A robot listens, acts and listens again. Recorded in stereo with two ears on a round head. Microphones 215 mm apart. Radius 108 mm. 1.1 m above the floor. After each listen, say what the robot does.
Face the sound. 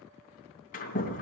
Turn 35° left.
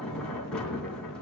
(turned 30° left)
Found it: a sliding door, straight ahead.